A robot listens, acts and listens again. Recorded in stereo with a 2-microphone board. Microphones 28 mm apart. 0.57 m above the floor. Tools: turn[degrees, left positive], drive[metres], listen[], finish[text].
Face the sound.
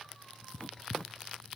Thought: The writing: about 40° left or 140° left.
Action: turn[40]
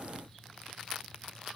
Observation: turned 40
Action: listen[]
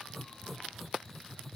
Action: finish[Found it: writing, straight ahead.]